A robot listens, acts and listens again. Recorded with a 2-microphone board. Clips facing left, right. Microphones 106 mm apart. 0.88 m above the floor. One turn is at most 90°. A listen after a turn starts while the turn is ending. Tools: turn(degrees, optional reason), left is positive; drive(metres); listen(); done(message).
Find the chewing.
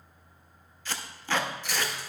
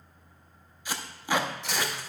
turn(degrees=-90)
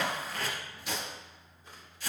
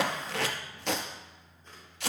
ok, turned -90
listen()
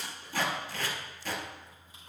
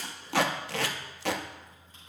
listen()
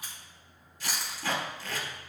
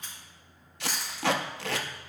turn(degrees=10, reason="The chewing is now 10° left.")
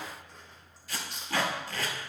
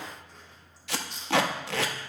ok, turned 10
done("Found it: chewing, straight ahead.")